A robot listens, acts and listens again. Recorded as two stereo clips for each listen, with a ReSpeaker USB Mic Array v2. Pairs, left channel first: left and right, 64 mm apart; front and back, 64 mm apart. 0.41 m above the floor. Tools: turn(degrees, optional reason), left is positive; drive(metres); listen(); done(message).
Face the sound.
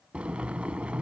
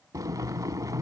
turn(degrees=-160, reason="The boiling: 160° right.")
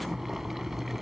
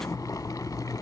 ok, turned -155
done("Found it: boiling, straight ahead.")